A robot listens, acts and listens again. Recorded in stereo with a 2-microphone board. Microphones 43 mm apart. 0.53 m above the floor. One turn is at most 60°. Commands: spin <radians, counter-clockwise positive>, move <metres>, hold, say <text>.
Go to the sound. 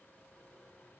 hold
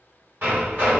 spin -0.87
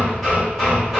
spin -0.17
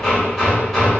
move 1.0
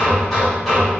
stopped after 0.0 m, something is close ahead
say Something is in my way. I am facing the hammering but have not reached it.